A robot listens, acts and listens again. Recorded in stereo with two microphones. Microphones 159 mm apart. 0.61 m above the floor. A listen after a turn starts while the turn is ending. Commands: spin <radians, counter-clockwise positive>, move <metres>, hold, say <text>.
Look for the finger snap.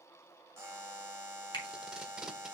spin 0.44
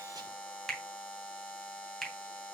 say Found it: a finger snap, straight ahead.